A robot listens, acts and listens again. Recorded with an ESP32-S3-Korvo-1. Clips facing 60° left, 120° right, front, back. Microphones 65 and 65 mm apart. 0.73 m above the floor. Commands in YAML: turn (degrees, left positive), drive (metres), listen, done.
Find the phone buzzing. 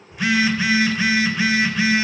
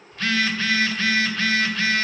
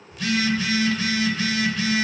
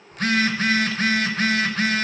turn: 135
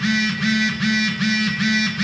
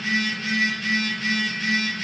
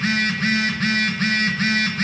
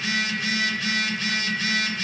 turn: 45
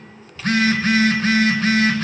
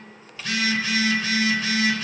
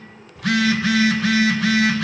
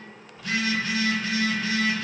turn: 15
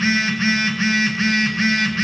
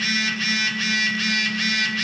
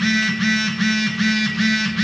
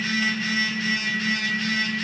done: "Facing the phone buzzing, under 1 m away."